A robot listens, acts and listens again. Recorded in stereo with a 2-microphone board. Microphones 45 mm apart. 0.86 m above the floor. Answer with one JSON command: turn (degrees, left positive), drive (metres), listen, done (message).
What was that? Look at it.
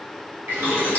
{"turn": -70}
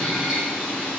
{"turn": -10}
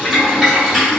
{"done": "Facing the boiling, 1 to 2 m away."}